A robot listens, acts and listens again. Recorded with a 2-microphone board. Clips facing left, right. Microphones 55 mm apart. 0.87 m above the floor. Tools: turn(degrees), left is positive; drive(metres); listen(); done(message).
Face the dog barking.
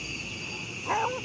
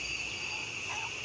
turn(degrees=45)
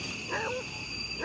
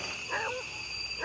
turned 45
turn(degrees=-10)
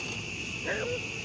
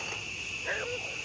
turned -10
done("Found it: a dog barking, straight ahead.")